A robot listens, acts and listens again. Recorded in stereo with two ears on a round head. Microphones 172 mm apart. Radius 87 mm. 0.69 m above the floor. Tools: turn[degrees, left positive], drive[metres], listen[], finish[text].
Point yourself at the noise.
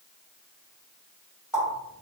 Action: turn[-30]
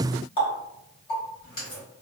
Thought: So it is at 25° left.
Action: turn[25]
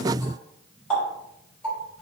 Action: finish[Facing the running tap, 1 to 2 m away.]